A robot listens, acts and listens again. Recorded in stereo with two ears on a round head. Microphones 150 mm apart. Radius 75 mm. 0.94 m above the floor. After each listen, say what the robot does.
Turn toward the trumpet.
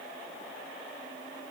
Keep listening.
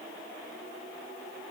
Keep listening.
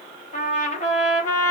Turn 45° left.
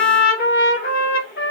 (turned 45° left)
Turn 80° left.
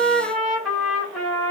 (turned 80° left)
Facing the trumpet, 1 to 2 m away.